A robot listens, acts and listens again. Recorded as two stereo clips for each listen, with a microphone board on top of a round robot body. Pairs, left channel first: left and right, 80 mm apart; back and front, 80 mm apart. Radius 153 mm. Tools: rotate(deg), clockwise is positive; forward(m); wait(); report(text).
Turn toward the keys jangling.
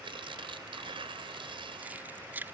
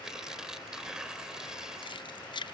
rotate(160)
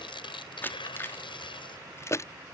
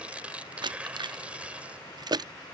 rotate(-35)
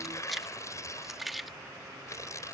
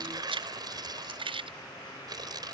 report("Facing the keys jangling.")